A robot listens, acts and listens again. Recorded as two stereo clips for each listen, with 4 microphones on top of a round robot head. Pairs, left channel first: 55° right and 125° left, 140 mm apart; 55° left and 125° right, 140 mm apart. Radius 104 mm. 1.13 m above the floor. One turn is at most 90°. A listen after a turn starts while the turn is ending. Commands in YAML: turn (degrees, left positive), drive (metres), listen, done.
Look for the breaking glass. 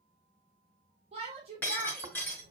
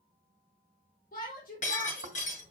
turn: 20
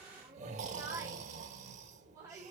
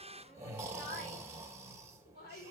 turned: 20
done: "I heard breaking glass from this way, but can't make it out now."